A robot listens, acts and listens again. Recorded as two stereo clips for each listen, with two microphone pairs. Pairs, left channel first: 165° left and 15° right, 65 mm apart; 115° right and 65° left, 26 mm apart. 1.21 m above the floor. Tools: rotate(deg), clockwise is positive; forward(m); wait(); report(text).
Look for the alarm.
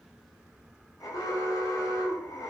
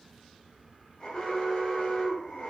rotate(165)
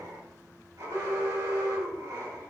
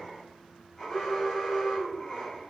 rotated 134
rotate(35)
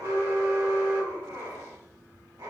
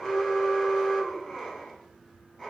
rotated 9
rotate(25)
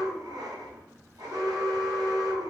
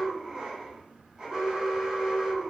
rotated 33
rotate(-10)
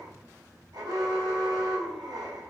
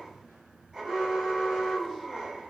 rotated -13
report("Found it: an alarm, straight ahead.")